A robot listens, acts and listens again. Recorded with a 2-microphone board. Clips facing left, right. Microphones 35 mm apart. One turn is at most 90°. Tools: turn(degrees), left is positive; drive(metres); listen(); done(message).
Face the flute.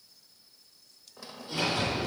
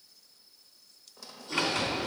listen()
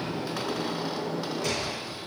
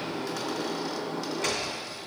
listen()
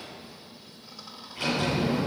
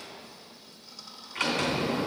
done("I can't make out a flute, only a sliding door and a squeak.")